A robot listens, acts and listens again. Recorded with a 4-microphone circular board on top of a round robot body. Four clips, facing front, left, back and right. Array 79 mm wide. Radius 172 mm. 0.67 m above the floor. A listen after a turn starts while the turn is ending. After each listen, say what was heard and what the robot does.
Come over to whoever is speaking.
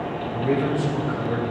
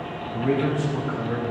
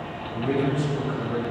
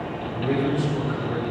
The man speaking: 75° left. Turn 75° left.
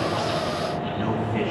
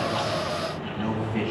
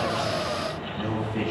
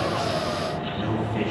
The man speaking is now 25° left. Turn 25° left.
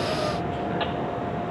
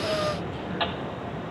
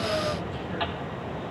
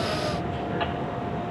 Keep listening.
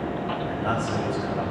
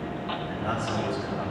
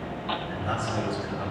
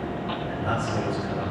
Drive 1.0 m forward.
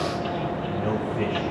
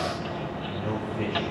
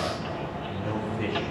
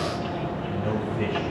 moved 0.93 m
Drive 1.0 m forward.
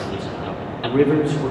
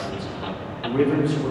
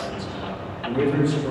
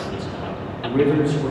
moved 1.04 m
Drive 1.0 m forward.
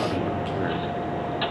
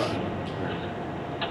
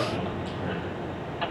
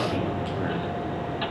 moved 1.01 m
Keep listening.
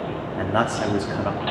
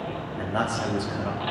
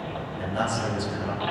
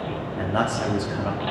The man speaking is now 10° right. Turn 10° right.
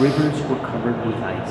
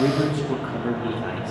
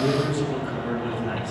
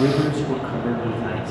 Drive 1.0 m forward.
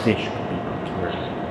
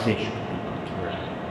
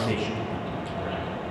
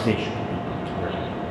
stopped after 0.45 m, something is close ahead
I am next to the man speaking.